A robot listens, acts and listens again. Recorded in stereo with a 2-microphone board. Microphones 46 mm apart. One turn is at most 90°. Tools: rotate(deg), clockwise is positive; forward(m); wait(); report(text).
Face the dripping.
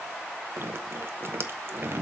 rotate(55)
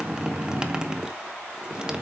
rotate(20)
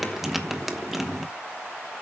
report("Facing the dripping, 1 to 2 m away.")